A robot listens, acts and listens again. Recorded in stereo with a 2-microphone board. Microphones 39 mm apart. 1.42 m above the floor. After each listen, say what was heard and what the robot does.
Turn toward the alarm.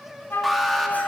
Turn 30° left.
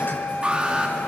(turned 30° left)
So it is at 25° right. Turn 25° right.
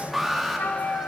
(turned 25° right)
Found it: an alarm, straight ahead, 2 to 4 m away.